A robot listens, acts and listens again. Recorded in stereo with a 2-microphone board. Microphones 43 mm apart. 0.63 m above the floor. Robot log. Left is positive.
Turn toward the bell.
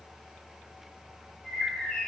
cmd idle
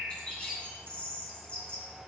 cmd idle
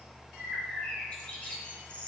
end: I can't make out a bell to turn to.